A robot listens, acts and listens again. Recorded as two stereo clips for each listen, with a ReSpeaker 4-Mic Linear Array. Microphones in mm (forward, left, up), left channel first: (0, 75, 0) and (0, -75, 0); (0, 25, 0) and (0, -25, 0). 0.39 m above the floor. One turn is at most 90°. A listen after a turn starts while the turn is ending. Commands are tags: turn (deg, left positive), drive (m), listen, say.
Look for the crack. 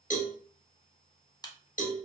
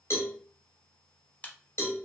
<turn deg="30"/>
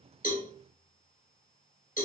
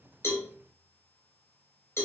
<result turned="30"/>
<listen/>
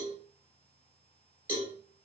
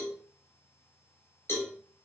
<say>I heard a crack, but can't make it out now. It was about straight ahead or 120° left.</say>